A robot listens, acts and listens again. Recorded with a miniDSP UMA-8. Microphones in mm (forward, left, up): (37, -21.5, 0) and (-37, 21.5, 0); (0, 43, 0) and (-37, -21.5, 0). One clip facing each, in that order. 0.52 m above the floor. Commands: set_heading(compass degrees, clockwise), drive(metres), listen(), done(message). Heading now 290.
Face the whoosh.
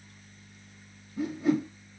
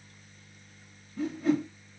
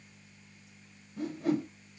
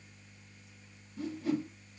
set_heading(245)
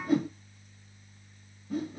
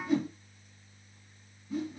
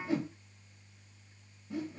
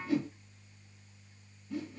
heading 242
done("Found it: a whoosh, straight ahead.")